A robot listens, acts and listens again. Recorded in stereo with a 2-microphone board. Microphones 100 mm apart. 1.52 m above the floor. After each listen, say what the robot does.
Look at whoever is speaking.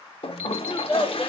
Turn 30° left.
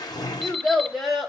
Found it: a child speaking, straight ahead.